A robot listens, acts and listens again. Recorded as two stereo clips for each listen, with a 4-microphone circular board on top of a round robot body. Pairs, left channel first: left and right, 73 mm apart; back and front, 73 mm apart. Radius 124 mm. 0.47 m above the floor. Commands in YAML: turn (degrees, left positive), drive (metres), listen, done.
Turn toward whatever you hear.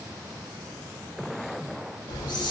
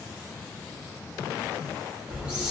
turn: 75
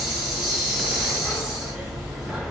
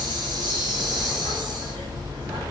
turn: -10
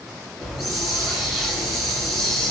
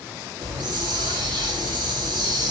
done: "Facing the hiss."